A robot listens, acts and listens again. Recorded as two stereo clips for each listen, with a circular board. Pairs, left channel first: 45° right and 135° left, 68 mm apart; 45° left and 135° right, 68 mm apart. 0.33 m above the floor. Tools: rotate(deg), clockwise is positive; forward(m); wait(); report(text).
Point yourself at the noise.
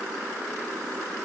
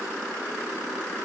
wait()
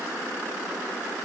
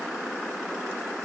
wait()
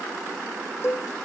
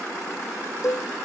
report("Found it: a cowbell, straight ahead.")